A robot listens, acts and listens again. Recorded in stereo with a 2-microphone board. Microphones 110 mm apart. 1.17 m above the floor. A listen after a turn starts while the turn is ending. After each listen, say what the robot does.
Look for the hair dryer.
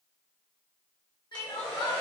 Turn 30° left.
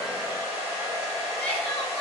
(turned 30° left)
Turn 25° right.
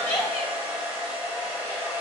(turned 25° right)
Turn 20° right.
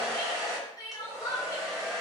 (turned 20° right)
Facing the hair dryer.